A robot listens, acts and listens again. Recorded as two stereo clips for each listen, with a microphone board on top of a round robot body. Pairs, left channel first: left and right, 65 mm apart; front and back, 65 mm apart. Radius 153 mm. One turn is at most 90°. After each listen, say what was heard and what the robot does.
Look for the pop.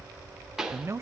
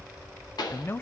The pop: 10° right. Turn 10° right.
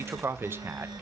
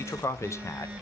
Facing where the pop came from. I can't hear it now.